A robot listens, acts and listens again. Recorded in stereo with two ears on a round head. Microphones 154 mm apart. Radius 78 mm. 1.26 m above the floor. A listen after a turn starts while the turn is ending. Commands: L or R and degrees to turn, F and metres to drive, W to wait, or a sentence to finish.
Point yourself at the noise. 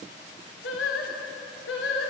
L90
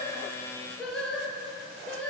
L10
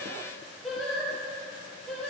Facing the singing, over 4 m away.